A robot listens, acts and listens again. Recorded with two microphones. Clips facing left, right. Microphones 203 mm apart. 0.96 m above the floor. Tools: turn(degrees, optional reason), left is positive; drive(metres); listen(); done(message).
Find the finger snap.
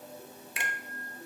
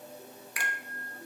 turn(degrees=25, reason="The finger snap: about 25° left or 155° left.")
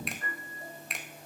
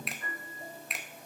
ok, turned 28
done("Facing the finger snap, under 1 m away.")